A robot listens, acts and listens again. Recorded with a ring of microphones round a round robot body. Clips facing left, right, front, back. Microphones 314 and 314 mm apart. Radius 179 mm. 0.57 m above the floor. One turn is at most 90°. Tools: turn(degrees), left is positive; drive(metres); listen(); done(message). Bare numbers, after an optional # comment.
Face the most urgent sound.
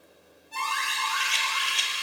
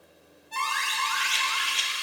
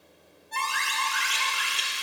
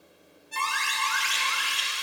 # The alarm: 100° right.
turn(-90)
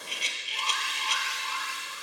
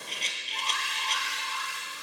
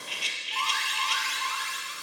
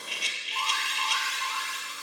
done("Found it: an alarm, straight ahead.")